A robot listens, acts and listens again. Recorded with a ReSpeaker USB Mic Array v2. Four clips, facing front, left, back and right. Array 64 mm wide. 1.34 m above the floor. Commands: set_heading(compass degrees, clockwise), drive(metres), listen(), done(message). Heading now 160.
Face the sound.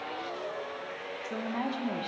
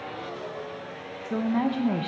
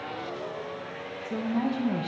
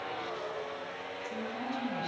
set_heading(80)
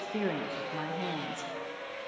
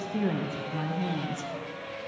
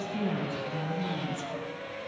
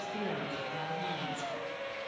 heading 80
set_heading(55)
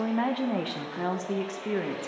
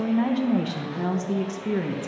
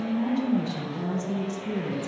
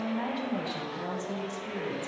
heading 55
set_heading(25)
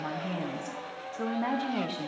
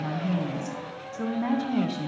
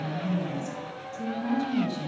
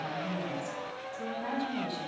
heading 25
set_heading(0)
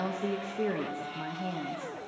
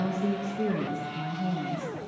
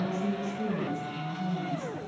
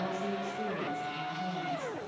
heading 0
set_heading(350)
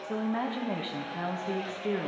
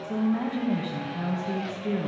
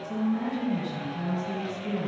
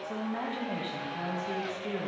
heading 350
done("Found it: a woman speaking, straight ahead, 1 to 2 m away.")